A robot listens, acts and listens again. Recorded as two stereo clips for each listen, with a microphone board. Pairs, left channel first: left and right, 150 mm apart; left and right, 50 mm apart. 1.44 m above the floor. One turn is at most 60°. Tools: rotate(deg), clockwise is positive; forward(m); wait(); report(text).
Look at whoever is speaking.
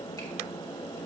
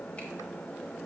wait()
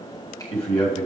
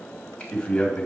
rotate(-40)
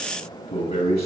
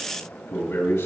rotate(-60)
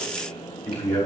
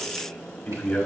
rotate(-15)
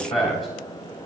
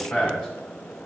report("Found it: a man speaking, straight ahead.")